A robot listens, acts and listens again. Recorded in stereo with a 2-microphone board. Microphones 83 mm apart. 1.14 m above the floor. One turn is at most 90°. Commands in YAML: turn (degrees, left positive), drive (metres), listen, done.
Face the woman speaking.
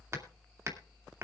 listen: true
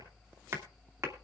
listen: true
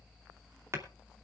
done: "I can't make out a woman speaking, only hammering."